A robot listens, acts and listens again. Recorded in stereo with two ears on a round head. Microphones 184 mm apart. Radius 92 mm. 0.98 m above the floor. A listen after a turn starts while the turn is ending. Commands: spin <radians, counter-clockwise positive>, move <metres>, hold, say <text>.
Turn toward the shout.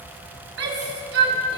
spin -1.05
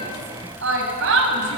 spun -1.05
spin -1.05
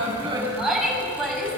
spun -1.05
say Facing the shout.